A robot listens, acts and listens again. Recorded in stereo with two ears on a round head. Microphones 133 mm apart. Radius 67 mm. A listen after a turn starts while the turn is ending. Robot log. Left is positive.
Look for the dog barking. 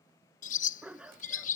cmd yaw -30
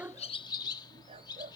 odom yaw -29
note: So it is at 140° right.
cmd yaw -140
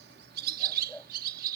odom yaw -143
end: Found it: a dog barking, straight ahead.